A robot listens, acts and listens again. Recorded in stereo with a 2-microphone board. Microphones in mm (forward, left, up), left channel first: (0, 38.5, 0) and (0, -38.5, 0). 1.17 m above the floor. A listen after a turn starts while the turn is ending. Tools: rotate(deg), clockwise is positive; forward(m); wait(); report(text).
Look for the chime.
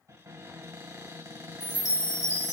rotate(-60)
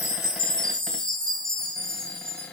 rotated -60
rotate(-15)
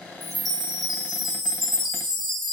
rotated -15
report("Found it: a chime, straight ahead.")